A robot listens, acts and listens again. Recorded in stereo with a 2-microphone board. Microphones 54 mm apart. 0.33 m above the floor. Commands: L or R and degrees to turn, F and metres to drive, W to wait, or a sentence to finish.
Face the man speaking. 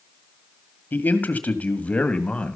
L20
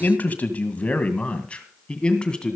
L30
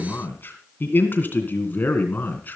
L145
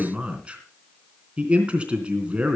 R20
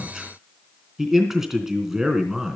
Facing the man speaking.